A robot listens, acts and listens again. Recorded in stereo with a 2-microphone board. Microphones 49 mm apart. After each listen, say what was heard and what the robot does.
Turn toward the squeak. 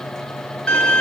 Keep listening.
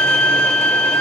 Keep listening.
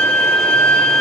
I can't make out a squeak to turn to.